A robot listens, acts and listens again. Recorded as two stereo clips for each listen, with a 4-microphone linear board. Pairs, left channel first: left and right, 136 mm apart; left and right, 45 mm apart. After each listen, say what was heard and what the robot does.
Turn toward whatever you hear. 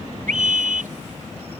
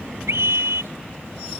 Turn 90° right.
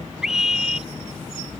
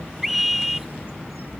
Found it: a scream, straight ahead.